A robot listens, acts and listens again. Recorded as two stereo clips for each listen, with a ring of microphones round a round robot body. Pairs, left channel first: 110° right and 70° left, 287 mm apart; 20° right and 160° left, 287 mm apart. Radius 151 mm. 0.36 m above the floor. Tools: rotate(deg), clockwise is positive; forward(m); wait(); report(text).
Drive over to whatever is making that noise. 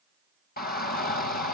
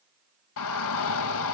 rotate(55)
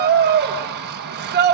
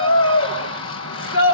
rotate(-15)
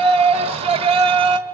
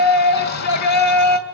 forward(1.0)
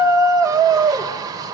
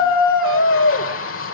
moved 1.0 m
forward(1.0)
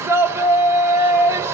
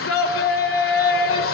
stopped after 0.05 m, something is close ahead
rotate(10)
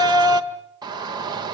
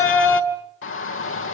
report("I am next to the shout.")